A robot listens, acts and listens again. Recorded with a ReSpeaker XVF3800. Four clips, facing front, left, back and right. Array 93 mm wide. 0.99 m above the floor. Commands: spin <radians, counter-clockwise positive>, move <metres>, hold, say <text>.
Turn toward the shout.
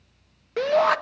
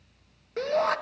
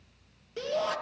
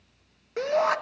spin -0.17
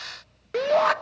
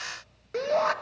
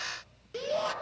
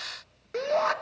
say Found it: a shout, straight ahead.